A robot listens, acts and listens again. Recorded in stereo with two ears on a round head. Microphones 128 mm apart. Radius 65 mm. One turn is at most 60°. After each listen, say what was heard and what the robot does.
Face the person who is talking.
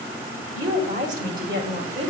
The woman speaking: about 60° right or 120° right. Turn 60° right.
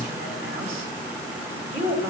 So it is at 20° right. Turn 20° right.
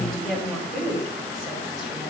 Found it: a woman speaking, straight ahead.